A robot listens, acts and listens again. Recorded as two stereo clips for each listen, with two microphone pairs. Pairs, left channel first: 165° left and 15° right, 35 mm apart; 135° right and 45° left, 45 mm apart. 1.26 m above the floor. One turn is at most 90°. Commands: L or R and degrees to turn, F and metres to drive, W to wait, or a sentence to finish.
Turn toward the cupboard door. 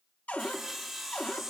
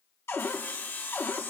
R90
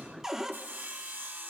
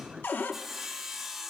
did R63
R90
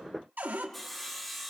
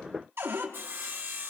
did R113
L20
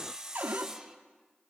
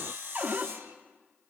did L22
Facing the cupboard door.